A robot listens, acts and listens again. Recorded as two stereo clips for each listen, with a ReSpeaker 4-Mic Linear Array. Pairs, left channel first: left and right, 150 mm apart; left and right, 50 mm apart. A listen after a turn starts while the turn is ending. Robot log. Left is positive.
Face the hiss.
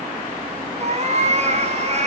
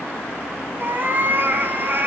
cmd idle
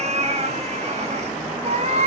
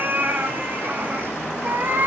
cmd idle
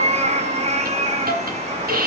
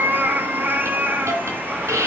cmd yaw -90
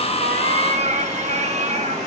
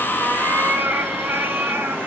cmd idle
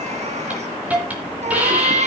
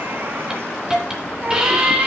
note: The hiss is now 10° right.
cmd yaw -10
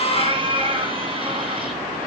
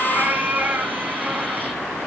cmd idle
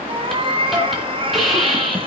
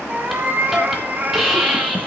end: Facing the hiss, 2 to 4 m away.